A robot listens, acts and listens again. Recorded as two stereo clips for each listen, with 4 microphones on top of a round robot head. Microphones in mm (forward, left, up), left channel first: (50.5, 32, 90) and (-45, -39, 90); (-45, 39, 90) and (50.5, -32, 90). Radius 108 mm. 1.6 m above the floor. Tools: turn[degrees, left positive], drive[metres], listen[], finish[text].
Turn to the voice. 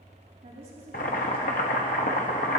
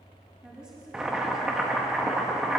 Thought: The woman speaking: 120° right.
Action: turn[-120]
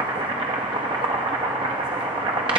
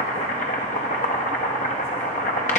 Action: listen[]
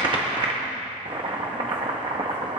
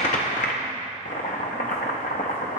Action: listen[]
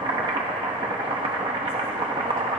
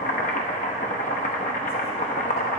Action: finish[I heard a woman speaking from this way, but can't make it out now.]